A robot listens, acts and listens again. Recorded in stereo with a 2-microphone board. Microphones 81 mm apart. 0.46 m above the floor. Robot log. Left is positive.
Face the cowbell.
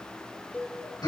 note: The cowbell: about 20° left or 160° left.
cmd yaw +20
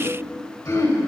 cmd idle
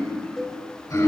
end: Found it: a cowbell, straight ahead, 2 to 4 m away.